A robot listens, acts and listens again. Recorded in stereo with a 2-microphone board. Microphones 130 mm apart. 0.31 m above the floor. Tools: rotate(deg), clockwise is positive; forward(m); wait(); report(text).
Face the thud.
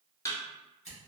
rotate(-25)
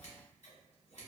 wait()
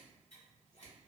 report("I heard a thud, but can't make it out now. It was about straight ahead or 130° left.")